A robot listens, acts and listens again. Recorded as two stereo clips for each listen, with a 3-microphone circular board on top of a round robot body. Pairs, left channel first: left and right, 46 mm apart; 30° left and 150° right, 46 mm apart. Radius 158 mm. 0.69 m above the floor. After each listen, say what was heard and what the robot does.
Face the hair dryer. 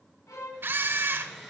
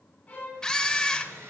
The hair dryer: straight behind. Turn 180° left.
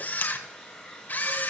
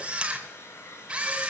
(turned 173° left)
Found it: a hair dryer, straight ahead.